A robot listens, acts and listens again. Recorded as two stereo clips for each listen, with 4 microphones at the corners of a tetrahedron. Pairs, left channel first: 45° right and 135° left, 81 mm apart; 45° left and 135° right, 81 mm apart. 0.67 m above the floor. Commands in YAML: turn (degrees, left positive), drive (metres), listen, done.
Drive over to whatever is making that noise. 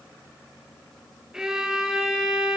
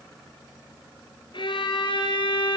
turn: 55
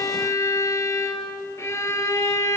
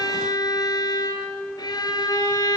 turn: 10
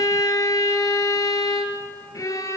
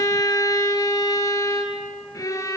drive: 1.0
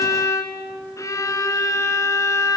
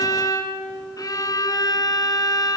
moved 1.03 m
drive: 1.0
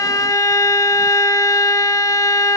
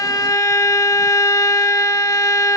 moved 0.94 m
drive: 1.0
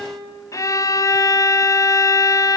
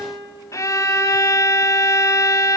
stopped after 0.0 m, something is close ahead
done: "Arrived at the violin, straight ahead."